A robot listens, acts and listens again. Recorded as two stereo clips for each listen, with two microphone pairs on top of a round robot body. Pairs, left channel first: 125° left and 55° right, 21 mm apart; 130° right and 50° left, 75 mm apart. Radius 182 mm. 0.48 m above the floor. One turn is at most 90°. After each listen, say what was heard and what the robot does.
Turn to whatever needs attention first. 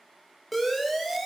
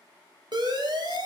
The siren: 40° left. Turn 40° left.
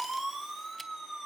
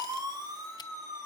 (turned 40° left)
The siren is now 20° left. Turn 20° left.
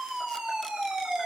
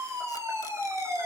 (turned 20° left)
Facing the siren.